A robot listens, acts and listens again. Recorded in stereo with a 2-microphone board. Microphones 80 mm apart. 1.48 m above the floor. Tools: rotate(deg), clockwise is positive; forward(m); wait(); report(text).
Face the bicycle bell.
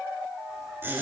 wait()
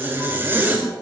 wait()
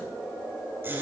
report("I can't make out a bicycle bell to turn to.")